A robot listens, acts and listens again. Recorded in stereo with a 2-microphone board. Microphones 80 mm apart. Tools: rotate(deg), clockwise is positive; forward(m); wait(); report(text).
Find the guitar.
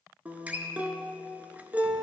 rotate(20)
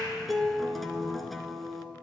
report("Found it: a guitar, straight ahead.")